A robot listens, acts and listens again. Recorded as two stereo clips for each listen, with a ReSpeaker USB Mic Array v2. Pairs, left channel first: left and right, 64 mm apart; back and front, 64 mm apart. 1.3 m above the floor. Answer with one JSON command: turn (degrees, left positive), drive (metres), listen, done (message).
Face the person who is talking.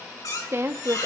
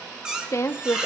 {"turn": -140}
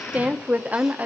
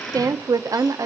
{"turn": -25}
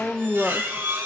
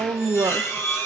{"done": "Found it: a woman speaking, straight ahead, under 1 m away."}